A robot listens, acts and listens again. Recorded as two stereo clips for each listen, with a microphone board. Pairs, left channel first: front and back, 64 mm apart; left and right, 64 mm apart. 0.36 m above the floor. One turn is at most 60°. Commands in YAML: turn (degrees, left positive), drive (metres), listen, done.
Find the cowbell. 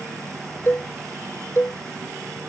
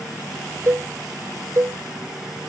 turn: -45
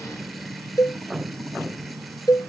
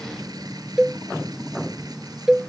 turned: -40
done: "Found it: a cowbell, straight ahead."